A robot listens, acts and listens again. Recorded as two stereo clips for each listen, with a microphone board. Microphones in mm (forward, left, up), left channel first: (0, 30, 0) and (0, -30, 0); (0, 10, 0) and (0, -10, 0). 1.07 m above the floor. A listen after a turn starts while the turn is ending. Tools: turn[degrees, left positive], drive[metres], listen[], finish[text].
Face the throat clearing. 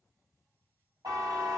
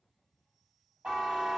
Action: listen[]
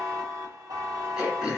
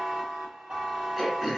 Action: turn[-30]
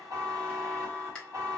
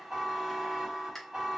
Thought: So it is at 15° left.
Action: turn[15]
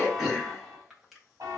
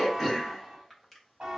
Action: finish[Facing the throat clearing.]